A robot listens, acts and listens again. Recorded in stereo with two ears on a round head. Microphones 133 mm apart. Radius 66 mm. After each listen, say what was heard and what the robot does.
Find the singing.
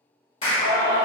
The singing: about 65° left or 115° left. Turn 65° left.
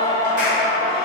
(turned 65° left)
So it is at 30° left. Turn 30° left.
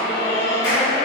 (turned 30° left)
The singing is now 25° left. Turn 25° left.
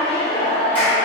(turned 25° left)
The singing is now 20° left. Turn 20° left.
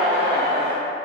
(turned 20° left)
The singing is now 15° left. Turn 15° left.
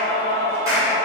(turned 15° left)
The singing is now 20° left. Turn 20° left.
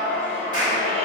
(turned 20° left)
The singing is now 10° left. Turn 10° left.
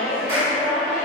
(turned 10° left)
Facing the singing, 1 to 2 m away.